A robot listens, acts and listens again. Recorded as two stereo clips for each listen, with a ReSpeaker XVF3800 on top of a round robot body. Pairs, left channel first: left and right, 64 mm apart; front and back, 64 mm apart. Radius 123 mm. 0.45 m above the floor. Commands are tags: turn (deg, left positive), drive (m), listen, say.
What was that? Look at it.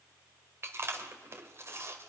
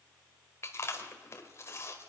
<turn deg="-45"/>
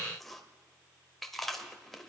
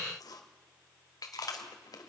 <say>Facing the chewing, 1 to 2 m away.</say>